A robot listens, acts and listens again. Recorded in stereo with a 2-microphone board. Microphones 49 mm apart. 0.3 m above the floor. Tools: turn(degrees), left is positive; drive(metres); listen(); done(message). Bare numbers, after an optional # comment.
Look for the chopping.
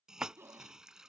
# The chopping: about 25° right or 155° right.
turn(-25)
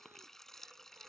listen()
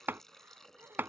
# So it is at 130° right.
turn(-130)
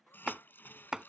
done("Found it: chopping, straight ahead.")